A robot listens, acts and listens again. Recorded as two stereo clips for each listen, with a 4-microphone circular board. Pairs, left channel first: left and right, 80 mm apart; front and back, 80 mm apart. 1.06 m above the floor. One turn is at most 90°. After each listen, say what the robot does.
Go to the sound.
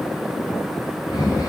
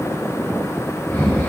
Turn 70° left.
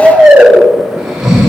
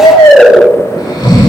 Turn 10° right.
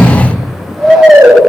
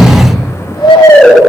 Drive 1.0 m forward.
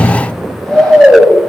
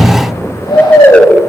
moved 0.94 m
Drive 1.0 m forward.
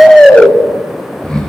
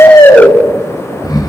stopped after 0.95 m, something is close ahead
Turn 10° left.
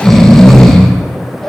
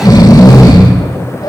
I am next to the snoring.